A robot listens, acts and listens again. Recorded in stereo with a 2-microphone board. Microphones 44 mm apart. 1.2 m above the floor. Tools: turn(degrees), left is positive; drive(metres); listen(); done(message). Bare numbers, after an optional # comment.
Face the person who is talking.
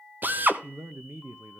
turn(-90)
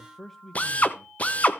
done("Facing the man speaking, under 1 m away.")